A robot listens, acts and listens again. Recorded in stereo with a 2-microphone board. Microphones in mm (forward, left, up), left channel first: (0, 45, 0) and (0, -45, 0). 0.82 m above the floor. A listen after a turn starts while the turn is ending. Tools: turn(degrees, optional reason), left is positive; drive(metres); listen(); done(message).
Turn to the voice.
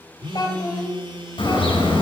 turn(degrees=45, reason="The child speaking: about 45° left or 135° left.")
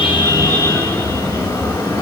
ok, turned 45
listen()
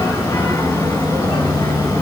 listen()
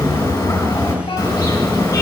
done("I heard a child speaking, but can't make it out now. It was about straight ahead or 90° left.")